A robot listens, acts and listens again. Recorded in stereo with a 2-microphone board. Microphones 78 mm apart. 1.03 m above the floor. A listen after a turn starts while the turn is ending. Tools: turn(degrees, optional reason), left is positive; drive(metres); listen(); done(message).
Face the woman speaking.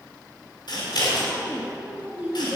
turn(degrees=-20, reason="The woman speaking: about 20° right or 160° right.")
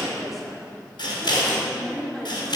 done("Facing the woman speaking.")